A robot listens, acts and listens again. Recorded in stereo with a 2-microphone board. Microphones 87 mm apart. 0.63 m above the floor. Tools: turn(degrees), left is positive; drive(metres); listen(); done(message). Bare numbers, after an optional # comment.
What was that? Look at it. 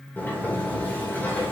# The sliding door: about 20° left or 160° left.
turn(20)
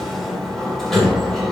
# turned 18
done("Facing the sliding door.")